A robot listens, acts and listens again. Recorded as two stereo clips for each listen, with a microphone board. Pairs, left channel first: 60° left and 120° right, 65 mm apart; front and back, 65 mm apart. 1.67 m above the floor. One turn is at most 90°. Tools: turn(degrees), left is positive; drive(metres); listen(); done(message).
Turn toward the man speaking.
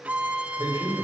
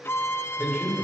turn(degrees=-90)
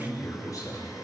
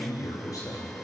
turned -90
turn(degrees=30)
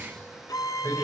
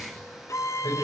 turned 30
turn(degrees=10)
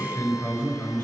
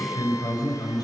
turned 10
done("Facing the man speaking, over 4 m away.")